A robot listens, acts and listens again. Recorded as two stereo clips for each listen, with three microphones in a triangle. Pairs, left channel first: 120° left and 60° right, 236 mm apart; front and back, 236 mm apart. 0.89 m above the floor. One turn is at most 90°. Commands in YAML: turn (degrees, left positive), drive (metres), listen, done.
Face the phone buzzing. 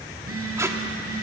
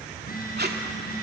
turn: -50
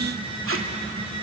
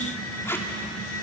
done: "Found it: a phone buzzing, straight ahead, over 4 m away."